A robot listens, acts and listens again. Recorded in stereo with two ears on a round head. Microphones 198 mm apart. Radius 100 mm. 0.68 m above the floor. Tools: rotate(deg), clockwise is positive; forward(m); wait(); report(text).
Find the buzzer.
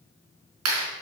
wait()
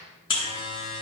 rotate(-20)
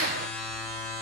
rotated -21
report("Found it: a buzzer, straight ahead, 2 to 4 m away.")